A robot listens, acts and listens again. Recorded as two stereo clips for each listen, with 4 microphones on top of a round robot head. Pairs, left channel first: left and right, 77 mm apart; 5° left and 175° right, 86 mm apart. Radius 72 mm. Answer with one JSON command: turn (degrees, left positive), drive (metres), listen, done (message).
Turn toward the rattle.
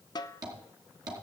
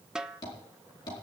{"listen": true}
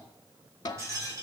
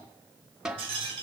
{"turn": -150}
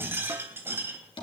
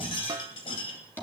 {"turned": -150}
{"turn": -30}
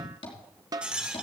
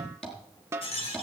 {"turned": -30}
{"turn": -15}
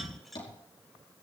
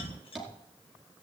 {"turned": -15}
{"done": "Found it: a rattle, straight ahead, 2 to 4 m away."}